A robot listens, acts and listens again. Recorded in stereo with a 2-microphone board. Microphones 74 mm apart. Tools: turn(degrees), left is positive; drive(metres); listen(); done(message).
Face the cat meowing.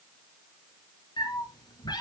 turn(degrees=75)
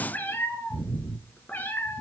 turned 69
turn(degrees=25)
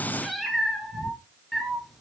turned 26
done("Found it: a cat meowing, straight ahead.")